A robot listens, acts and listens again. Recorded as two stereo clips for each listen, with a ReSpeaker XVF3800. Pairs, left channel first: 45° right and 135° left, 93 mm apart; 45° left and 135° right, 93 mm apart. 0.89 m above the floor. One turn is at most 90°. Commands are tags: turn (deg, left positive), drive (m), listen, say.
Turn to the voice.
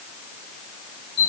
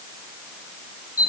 <listen/>
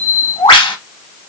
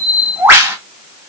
<listen/>
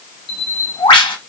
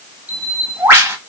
<say>I can't make out anyone speaking to turn to.</say>